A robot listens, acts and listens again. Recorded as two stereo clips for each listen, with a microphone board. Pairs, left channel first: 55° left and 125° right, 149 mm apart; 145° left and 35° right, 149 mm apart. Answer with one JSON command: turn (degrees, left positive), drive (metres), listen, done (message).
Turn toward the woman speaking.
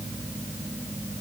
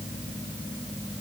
{"listen": true}
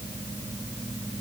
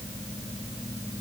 {"listen": true}
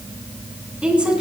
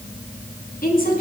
{"turn": 155}
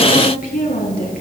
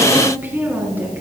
{"turn": 40}
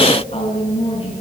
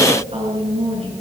{"turn": 10}
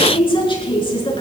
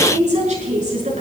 {"done": "Found it: a woman speaking, straight ahead, over 4 m away."}